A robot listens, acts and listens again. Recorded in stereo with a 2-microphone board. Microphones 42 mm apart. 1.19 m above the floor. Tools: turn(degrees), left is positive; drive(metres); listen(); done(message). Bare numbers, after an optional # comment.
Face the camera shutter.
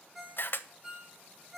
# The camera shutter: about 55° left or 125° left.
turn(55)
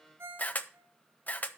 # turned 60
# So it is at 50° left.
turn(50)
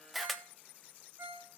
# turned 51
done("Found it: a camera shutter, straight ahead.")